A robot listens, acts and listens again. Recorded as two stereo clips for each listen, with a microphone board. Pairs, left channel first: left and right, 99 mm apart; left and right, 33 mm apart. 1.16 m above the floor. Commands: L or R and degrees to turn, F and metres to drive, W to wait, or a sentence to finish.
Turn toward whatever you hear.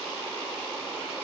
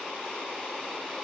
W
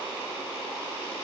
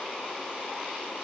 W
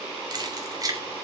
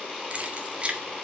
R35
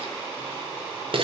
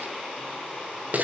R125
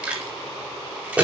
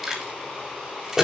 R15
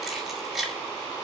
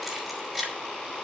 Facing the keys jangling, over 4 m away.